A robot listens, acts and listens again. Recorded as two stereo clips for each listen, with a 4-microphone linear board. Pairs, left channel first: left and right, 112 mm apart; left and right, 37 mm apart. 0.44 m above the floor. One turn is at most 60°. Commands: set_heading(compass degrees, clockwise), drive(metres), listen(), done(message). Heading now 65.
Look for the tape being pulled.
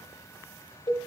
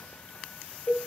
listen()
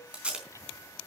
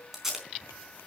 set_heading(95)
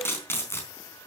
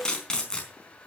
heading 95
set_heading(75)
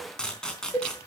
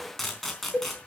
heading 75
done("Found it: tape being pulled, straight ahead.")